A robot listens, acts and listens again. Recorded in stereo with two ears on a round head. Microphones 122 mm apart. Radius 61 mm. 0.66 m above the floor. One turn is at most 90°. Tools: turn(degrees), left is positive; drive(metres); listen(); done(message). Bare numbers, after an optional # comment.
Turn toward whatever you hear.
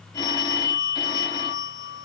# The phone ringing: about 30° left or 150° left.
turn(30)
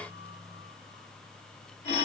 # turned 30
# So it is at 120° left.
turn(90)
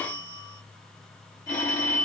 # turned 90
# The phone ringing is now 25° left.
turn(25)
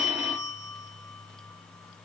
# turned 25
# The phone ringing is now 10° right.
turn(-10)
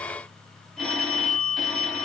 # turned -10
done("Facing the phone ringing, under 1 m away.")